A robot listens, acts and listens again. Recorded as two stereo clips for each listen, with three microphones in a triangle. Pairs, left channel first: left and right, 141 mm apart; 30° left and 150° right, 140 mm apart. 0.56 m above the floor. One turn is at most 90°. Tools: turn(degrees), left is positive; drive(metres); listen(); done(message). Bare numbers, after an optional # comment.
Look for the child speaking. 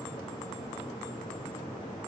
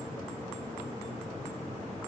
listen()
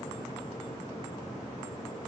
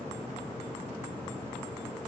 listen()
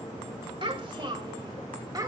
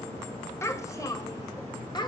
# The child speaking: 25° right.
turn(-25)
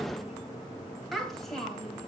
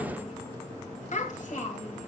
done("Found it: a child speaking, straight ahead, 2 to 4 m away.")